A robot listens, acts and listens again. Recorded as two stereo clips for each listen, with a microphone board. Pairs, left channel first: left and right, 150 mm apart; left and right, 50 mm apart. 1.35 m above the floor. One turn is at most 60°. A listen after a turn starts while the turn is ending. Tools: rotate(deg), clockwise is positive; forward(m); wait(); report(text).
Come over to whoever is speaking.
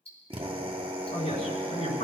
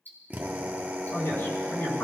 rotate(-50)
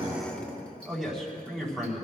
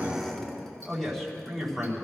forward(1.0)
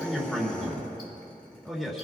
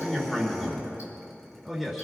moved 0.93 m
forward(1.0)
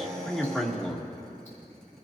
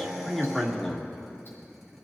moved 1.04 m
forward(1.0)
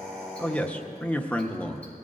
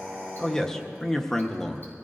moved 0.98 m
rotate(-10)
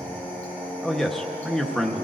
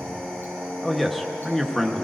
forward(1.0)
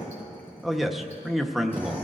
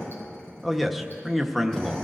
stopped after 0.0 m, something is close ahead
report("Arrived at the man speaking, straight ahead.")